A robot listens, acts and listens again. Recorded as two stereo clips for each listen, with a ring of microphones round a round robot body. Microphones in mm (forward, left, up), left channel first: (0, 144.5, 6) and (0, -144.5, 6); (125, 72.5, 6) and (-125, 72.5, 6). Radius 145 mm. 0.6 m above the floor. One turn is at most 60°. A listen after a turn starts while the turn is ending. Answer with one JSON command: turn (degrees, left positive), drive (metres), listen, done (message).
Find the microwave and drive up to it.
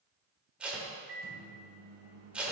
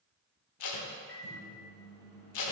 {"turn": -40}
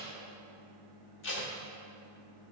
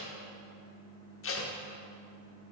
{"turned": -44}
{"drive": 1.0}
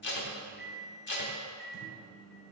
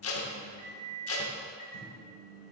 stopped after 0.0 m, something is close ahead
{"done": "Blocked. The microwave is further on, straight ahead."}